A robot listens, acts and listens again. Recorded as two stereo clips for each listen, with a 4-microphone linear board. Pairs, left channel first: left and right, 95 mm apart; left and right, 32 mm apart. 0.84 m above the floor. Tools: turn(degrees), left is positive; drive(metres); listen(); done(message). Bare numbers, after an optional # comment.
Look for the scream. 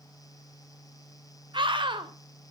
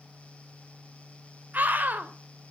# The scream: about 60° right or 120° right.
turn(-60)
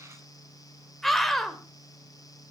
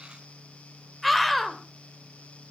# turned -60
done("Facing the scream, 2 to 4 m away.")